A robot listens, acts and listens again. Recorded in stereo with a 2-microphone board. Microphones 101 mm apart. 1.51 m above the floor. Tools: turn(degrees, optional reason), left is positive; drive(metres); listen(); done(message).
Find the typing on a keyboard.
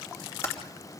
turn(degrees=25, reason="The typing on a keyboard: about 25° left or 155° left.")
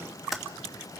done("Found it: typing on a keyboard, straight ahead, 2 to 4 m away.")